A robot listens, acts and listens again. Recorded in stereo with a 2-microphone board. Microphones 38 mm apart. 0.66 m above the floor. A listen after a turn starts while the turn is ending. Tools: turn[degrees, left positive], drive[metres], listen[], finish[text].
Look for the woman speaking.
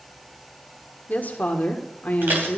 Thought: The woman speaking: about 50° left or 130° left.
Action: turn[50]
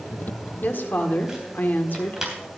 Thought: So it is at 75° left.
Action: turn[75]
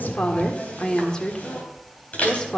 Thought: The woman speaking is now 25° left.
Action: turn[25]
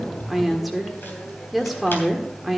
Action: finish[Facing the woman speaking.]